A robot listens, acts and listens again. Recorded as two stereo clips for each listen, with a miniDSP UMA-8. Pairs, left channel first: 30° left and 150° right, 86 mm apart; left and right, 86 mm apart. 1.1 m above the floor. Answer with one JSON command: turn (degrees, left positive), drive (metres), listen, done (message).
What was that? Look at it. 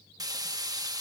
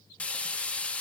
{"turn": 165}
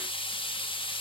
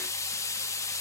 {"turn": 35}
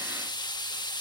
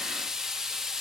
{"done": "Facing the frying."}